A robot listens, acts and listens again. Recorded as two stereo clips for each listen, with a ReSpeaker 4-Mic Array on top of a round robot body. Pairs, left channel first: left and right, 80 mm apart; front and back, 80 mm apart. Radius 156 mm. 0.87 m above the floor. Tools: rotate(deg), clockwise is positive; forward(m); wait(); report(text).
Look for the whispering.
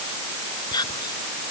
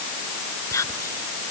rotate(-55)
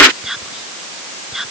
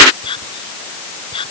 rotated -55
report("Found it: whispering, straight ahead.")